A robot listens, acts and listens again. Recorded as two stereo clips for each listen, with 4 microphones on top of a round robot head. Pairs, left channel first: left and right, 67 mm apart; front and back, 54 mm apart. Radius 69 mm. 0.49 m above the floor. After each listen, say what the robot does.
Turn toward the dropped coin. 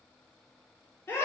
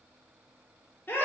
Keep listening.
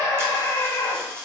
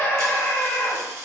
Turn 145° right.
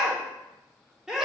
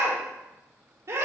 Facing where the dropped coin came from. I can't hear it now.